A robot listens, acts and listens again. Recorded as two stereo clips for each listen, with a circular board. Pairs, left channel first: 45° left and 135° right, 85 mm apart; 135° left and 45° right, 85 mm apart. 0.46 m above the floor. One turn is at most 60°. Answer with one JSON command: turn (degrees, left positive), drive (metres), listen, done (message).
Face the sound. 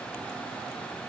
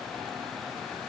{"listen": true}
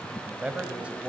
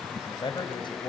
{"turn": 60}
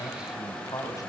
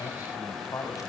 {"turn": 60}
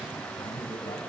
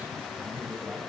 {"turn": 30}
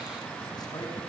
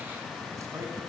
{"listen": true}
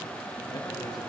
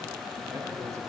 {"done": "Facing where the man speaking came from. I can't hear it now."}